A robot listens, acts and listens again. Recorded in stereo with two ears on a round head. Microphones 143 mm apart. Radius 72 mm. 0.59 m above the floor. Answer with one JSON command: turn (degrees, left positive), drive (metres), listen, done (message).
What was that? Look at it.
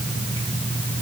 {"listen": true}
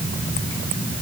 {"listen": true}
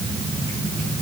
{"done": "I can't make out anything."}